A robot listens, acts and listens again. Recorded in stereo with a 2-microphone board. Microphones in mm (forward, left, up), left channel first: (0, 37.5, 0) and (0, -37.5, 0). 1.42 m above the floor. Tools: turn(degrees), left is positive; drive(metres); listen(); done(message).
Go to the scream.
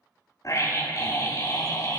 turn(degrees=45)
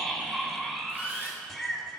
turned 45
drive(metres=1.0)
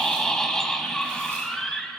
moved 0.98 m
drive(metres=1.0)
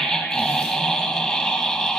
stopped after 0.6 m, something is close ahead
done("I am next to the scream.")